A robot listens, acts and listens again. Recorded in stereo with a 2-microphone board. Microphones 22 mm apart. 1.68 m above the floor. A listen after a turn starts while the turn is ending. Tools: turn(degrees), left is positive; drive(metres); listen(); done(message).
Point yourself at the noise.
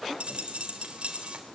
turn(degrees=-65)
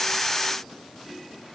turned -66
listen()
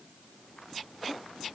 done("I heard a dropped coin, but can't make it out now. It was about straight ahead or 50° right.")